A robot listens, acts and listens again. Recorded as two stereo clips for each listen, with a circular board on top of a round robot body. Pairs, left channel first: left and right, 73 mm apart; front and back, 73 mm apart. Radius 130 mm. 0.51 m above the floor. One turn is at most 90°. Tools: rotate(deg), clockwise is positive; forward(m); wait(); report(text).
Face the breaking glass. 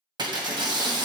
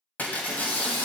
rotate(70)
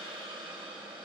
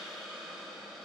report("Facing where the breaking glass came from. I can't hear it now.")